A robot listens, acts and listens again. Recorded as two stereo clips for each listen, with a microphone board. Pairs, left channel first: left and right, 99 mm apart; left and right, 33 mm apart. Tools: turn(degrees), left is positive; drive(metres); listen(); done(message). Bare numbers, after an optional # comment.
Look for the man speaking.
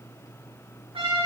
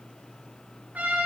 listen()
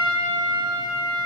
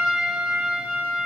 listen()
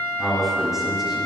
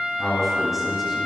turn(-30)
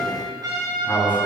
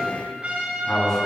# So it is at 20° left.
turn(20)
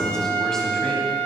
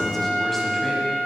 listen()
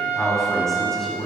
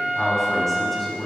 done("Facing the man speaking.")